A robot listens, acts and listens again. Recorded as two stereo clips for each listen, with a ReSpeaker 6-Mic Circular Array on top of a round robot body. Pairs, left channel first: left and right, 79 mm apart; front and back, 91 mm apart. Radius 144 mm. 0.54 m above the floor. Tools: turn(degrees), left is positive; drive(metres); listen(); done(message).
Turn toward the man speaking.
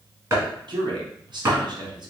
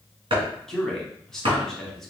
turn(degrees=-85)
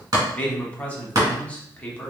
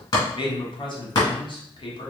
turn(degrees=15)
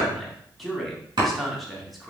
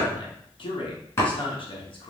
done("Facing the man speaking.")